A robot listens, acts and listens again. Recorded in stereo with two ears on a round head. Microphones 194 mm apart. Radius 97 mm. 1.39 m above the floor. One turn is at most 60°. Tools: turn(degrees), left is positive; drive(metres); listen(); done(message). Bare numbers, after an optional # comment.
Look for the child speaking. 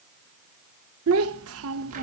# The child speaking: about 70° right or 110° right.
turn(-60)
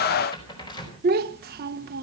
# So it is at 45° right.
turn(-45)
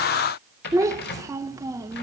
# The child speaking is now 15° right.
turn(-15)
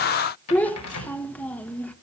done("Found it: a child speaking, straight ahead, 1 to 2 m away.")